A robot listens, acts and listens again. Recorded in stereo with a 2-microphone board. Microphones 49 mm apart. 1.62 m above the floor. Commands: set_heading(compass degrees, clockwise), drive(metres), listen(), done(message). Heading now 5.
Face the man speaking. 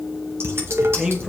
set_heading(20)
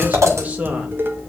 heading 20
set_heading(50)
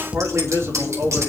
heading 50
set_heading(170)
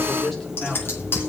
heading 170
set_heading(160)
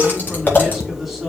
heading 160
done("Facing the man speaking, over 4 m away.")